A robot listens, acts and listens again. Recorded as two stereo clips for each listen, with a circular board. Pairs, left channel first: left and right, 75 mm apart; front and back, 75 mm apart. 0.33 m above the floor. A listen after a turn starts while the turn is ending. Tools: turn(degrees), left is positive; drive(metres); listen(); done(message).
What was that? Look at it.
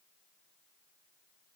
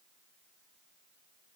listen()
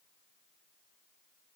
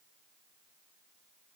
listen()
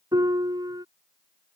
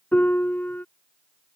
turn(degrees=-65)
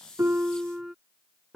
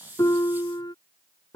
done("Facing the piano.")